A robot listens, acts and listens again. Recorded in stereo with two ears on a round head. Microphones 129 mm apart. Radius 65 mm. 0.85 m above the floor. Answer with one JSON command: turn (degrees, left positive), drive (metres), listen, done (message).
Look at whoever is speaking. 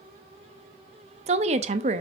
{"turn": -45}
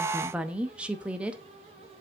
{"turn": -10}
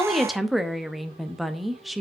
{"done": "Facing the woman speaking, under 1 m away."}